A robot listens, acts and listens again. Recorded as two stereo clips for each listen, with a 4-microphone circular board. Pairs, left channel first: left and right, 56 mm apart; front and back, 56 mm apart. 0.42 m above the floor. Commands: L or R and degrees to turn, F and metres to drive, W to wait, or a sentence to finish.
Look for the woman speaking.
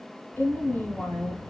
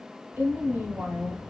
L135
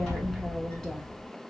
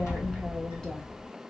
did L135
W
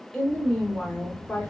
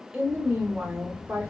L140
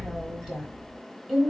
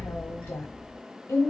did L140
R10
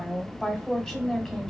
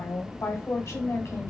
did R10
Facing the woman speaking.